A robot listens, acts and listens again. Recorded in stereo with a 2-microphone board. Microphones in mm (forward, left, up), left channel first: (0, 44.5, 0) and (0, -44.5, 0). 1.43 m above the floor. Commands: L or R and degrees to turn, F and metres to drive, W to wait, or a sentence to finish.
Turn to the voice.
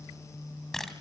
W
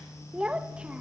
R30
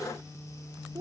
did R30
R140
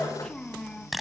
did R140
L10
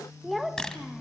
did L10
Facing the child speaking.